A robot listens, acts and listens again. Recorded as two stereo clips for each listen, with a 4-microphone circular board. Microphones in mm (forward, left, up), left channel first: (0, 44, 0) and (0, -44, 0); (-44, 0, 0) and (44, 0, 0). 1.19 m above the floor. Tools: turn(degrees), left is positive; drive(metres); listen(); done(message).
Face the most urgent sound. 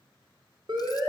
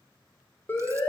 turn(degrees=-115)
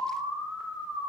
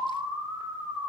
done("Facing the siren, over 4 m away.")